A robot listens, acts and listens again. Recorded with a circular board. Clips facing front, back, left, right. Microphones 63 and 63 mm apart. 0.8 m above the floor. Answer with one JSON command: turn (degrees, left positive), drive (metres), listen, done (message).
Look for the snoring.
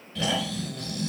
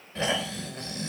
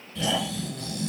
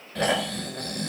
{"turn": -120}
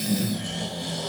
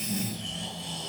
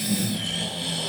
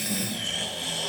{"done": "Facing the snoring, 2 to 4 m away."}